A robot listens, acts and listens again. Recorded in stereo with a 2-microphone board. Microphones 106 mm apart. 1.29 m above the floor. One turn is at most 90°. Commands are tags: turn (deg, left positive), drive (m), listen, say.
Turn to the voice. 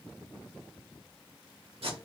<listen/>
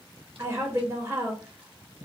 <turn deg="-30"/>
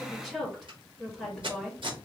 <say>Facing the woman speaking, 1 to 2 m away.</say>